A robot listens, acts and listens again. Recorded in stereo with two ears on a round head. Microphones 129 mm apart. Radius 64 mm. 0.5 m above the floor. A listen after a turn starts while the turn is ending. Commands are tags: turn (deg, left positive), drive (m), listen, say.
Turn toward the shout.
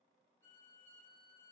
<listen/>
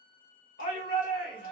<turn deg="60"/>
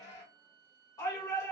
<turn deg="25"/>
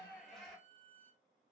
<say>Facing the shout, 1 to 2 m away.</say>